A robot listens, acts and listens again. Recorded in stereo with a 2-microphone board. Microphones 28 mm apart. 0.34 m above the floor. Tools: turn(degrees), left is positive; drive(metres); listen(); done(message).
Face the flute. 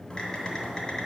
listen()
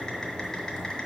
listen()
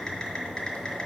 done("I can't make out a flute to turn to.")